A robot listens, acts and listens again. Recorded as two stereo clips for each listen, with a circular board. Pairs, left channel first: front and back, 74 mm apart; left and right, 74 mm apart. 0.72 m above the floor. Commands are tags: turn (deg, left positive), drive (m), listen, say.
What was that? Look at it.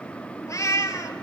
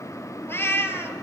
<turn deg="35"/>
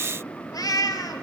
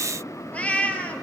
<turn deg="20"/>
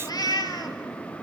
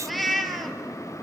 <say>Found it: a cat meowing, straight ahead, 1 to 2 m away.</say>